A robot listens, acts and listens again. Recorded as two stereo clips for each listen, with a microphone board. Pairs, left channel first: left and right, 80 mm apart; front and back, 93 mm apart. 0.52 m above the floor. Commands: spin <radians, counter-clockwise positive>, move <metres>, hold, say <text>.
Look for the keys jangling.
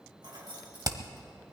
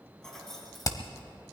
spin -1.48
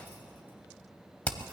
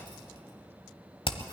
hold
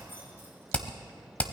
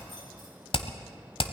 hold
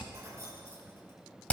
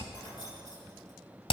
spin -0.61
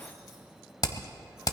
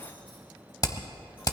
hold
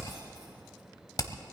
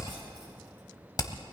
hold
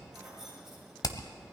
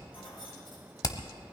say Facing the keys jangling, over 4 m away.